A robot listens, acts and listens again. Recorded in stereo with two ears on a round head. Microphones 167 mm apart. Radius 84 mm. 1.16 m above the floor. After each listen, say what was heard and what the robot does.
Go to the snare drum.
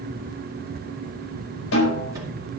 Turn 90° left.
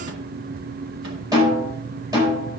So it is at 20° right. Turn 20° right.
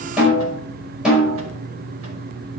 Drive 1.0 m forward.
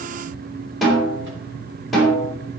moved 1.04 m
Drive 1.0 m forward.
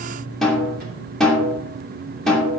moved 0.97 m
Drive 1.0 m forward.
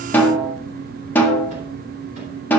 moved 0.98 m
The snare drum is now 10° left. Turn 10° left.
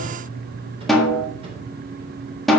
Drive 1.0 m forward.
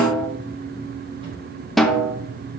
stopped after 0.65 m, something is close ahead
Arrived at the snare drum, straight ahead.